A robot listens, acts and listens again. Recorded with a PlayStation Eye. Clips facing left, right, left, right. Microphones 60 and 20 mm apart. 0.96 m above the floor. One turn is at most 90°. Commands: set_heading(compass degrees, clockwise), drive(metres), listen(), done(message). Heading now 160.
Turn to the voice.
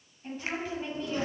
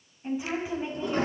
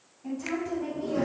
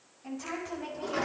set_heading(175)
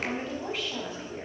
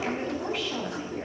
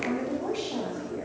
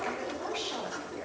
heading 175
set_heading(205)
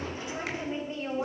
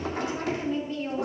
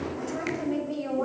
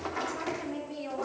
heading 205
set_heading(180)
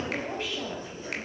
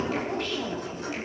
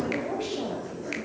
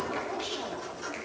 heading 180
done("Found it: a woman speaking, straight ahead, over 4 m away.")